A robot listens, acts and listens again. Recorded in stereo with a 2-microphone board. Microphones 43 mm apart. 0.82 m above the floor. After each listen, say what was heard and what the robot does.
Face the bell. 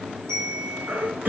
Turn 90° right.
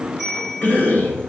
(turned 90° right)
Found it: a bell, straight ahead.